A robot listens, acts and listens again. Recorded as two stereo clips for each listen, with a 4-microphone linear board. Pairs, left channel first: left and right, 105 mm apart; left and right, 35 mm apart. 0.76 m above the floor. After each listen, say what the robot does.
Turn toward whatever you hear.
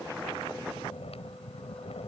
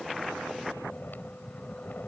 Turn 90° left.
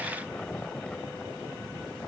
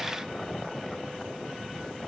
Turn 10° left.
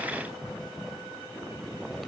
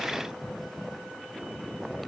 Facing the snoring.